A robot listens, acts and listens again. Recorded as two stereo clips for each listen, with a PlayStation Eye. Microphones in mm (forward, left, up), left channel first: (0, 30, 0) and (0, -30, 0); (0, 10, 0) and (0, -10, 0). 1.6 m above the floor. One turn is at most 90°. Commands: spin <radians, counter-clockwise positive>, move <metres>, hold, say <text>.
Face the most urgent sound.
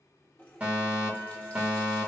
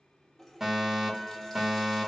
spin -0.44
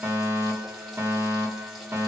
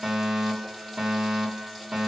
spin -1.57
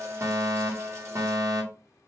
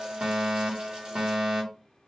spin -1.22
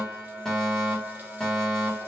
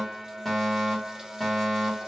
spin 0.17
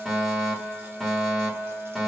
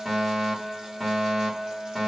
say Found it: a fire alarm, straight ahead, 1 to 2 m away.